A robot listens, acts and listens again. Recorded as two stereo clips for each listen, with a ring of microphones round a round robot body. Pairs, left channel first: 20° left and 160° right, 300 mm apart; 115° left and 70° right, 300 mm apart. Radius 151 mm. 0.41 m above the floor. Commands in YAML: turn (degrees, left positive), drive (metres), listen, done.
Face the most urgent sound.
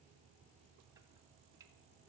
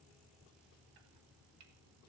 listen: true
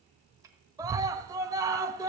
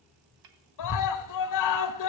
turn: 125
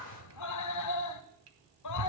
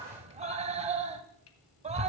done: "Found it: a scream, straight ahead, 1 to 2 m away."